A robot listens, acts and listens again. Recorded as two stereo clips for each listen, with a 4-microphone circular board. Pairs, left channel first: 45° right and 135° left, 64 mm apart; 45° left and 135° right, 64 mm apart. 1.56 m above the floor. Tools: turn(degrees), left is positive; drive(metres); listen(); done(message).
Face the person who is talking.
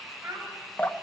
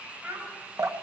turn(degrees=170)
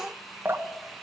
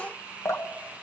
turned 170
listen()
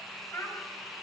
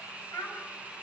done("Found it: a child speaking, straight ahead.")